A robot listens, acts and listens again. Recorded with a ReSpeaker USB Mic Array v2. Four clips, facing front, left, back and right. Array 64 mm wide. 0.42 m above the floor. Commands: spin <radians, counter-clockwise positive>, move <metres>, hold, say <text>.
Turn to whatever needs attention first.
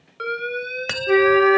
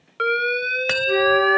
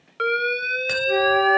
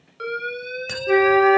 spin 2.01
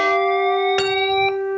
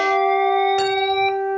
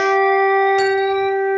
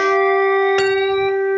hold
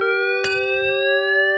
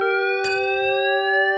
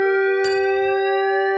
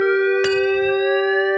hold
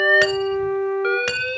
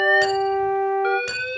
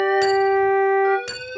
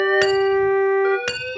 spin 0.17
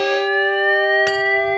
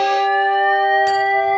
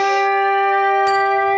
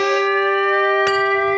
hold
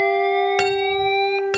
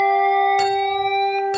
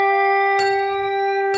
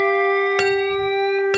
hold
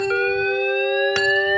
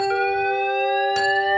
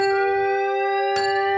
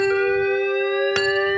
say I heard an alarm from this way, but can't make it out now.